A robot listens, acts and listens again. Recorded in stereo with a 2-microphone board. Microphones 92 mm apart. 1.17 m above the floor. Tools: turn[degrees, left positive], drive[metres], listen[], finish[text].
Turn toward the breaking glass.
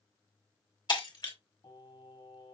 Thought: The breaking glass: about 50° left or 130° left.
Action: turn[50]
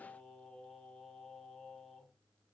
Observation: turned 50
Action: listen[]
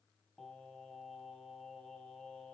Action: finish[I heard breaking glass, but can't make it out now. It was about straight ahead or 80° left.]